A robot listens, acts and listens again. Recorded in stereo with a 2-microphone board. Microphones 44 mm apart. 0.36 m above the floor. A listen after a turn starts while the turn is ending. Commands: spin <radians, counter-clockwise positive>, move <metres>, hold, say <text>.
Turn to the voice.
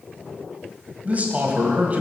spin -0.61
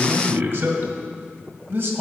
spin -1.83
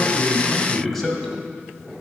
spin 0.17
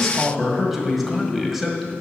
say Facing the man speaking.